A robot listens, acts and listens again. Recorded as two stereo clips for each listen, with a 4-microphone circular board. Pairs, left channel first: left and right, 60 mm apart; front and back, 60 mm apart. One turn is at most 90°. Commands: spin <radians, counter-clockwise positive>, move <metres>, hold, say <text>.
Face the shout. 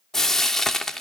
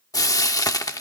hold
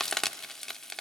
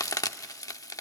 hold
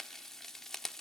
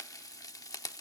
say I can't make out a shout to turn to.